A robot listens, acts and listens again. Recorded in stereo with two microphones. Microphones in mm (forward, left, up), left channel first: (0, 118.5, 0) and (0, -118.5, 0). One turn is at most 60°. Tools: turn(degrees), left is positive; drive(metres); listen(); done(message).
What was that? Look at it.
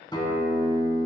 turn(degrees=20)
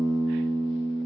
done("Found it: a guitar, straight ahead, 1 to 2 m away.")